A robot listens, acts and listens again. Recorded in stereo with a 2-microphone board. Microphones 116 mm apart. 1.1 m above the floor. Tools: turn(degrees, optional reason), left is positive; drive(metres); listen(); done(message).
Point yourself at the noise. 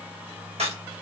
turn(degrees=-65, reason="The crack: about 65° right or 115° right.")
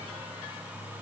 listen()
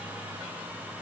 done("I heard a crack, but can't make it out now. It was about straight ahead or 50° right.")